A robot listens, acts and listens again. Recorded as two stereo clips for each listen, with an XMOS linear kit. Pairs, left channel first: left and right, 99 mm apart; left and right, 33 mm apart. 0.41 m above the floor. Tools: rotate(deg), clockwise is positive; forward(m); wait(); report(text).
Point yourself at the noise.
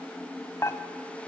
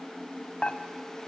rotate(-35)
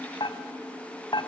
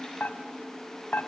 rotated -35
rotate(-105)
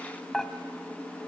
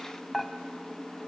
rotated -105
report("Found it: dishes clattering, straight ahead.")